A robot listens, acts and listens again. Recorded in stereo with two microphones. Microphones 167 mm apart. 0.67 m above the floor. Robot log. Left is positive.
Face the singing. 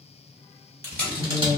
cmd yaw -30
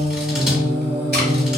note: So it is at 140° right.
cmd yaw -140
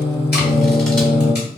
note: The singing is now 40° left.
cmd yaw +40
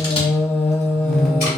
end: Found it: singing, straight ahead.